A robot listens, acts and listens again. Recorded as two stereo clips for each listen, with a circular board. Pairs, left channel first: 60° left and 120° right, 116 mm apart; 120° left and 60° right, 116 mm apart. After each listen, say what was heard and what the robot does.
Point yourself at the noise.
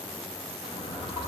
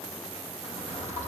The drawer: 105° left. Turn 105° left.
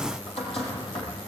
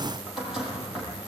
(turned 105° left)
The drawer is now 25° left. Turn 25° left.
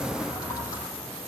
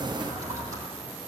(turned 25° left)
Facing the drawer, over 4 m away.